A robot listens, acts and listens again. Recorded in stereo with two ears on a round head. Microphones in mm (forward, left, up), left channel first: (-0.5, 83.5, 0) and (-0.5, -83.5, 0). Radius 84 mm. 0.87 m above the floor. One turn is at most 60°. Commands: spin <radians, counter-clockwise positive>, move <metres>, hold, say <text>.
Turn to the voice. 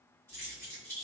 hold
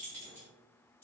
hold
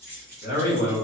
spin 0.87
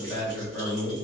say Facing the man speaking, 1 to 2 m away.